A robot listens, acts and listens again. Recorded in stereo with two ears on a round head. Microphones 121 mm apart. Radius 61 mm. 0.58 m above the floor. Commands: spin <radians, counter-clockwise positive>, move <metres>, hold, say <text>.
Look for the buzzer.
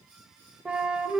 hold
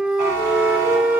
spin -1.05
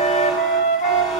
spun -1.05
say Facing the buzzer.